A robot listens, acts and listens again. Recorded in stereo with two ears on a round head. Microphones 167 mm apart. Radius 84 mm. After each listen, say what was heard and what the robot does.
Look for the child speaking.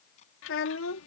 Turn 90° left.
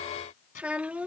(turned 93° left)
So it is at 10° right. Turn 10° right.
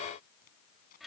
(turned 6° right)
Found it: a child speaking, straight ahead.